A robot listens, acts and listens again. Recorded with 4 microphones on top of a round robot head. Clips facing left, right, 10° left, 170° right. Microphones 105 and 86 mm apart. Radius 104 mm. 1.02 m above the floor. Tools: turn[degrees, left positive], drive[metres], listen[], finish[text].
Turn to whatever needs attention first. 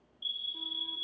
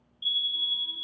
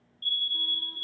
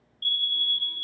Thought: The fire alarm: 160° right.
Action: turn[-160]
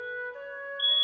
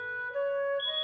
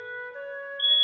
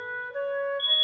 Thought: The fire alarm is now 15° left.
Action: turn[15]
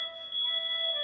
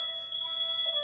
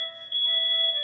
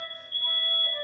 Action: finish[Facing the fire alarm.]